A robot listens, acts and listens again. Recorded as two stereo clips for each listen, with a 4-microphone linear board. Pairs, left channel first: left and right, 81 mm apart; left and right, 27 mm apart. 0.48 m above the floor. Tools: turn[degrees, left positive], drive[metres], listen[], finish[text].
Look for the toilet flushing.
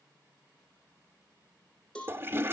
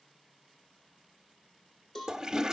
Thought: The toilet flushing: about 25° right or 155° right.
Action: turn[-25]
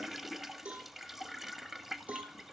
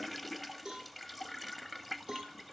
Action: finish[Facing the toilet flushing.]